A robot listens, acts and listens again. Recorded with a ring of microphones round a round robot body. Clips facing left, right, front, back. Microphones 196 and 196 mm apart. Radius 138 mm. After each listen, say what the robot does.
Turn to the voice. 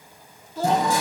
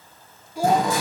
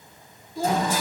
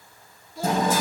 Turn 10° right.
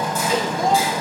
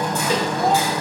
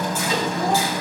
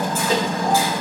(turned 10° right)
Keep listening.
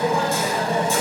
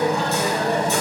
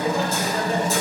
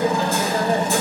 Keep listening.
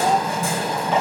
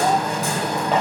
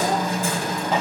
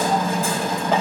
I heard a child speaking from this way, but can't make it out now.